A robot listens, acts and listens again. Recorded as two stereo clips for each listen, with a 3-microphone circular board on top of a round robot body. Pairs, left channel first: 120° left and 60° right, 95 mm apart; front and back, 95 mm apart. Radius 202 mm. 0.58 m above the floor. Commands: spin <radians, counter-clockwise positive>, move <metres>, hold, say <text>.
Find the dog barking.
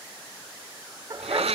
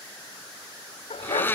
spin -0.17
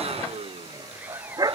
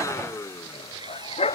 spin -0.17
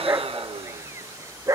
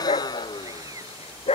say Found it: a dog barking, straight ahead.